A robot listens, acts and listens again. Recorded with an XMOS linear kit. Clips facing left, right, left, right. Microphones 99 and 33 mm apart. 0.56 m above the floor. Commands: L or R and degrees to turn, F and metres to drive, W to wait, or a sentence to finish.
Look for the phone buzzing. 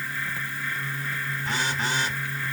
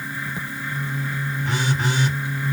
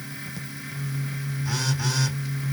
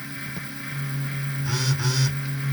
R15
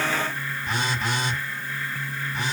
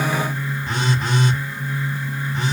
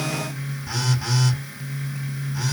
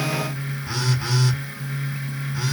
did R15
R150
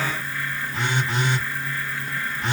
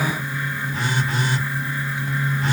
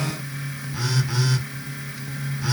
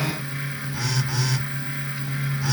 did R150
L25
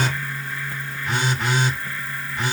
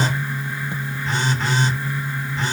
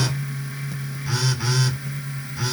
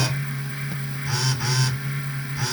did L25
L15
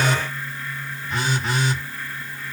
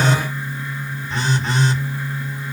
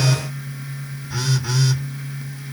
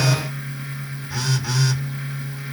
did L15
Facing the phone buzzing.